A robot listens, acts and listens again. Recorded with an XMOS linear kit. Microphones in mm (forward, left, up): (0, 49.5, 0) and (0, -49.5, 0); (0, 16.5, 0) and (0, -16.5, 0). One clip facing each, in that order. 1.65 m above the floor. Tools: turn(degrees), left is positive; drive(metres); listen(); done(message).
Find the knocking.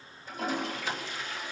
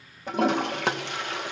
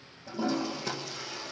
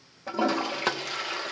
listen()
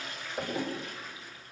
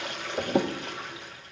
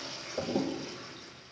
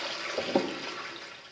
turn(degrees=-20)
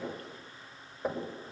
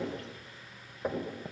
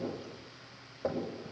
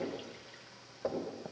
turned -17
done("Found it: knocking, straight ahead, over 4 m away.")